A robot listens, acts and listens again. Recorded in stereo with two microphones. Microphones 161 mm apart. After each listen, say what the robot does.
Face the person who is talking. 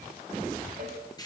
Keep listening.
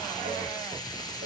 Keep listening.
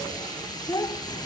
Turn 25° left.
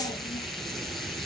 Keep listening.
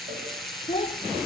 Turn 125° left.
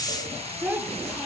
Turn 10° right.
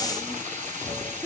Found it: a child speaking, straight ahead.